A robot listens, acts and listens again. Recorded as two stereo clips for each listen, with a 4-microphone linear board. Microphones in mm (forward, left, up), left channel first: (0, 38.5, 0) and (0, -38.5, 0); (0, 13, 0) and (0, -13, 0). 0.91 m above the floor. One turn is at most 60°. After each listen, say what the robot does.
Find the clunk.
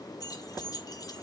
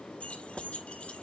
Keep listening.
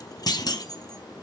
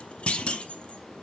Turn 60° left.
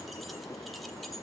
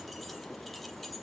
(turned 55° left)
Keep listening.
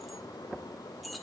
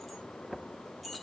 I heard a clunk, but can't make it out now. It was about 5° left or 65° left.